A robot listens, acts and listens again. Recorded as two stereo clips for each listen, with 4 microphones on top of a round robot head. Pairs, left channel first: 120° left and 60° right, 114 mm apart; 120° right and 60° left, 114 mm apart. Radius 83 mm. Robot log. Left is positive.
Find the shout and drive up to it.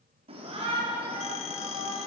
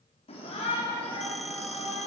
note: The shout: 90° right.
cmd yaw -90
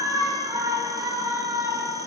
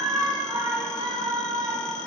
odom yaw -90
cmd fwd 1.0
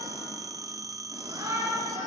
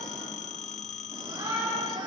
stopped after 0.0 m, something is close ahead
end: Something is in my way. I am facing the shout but have not reached it.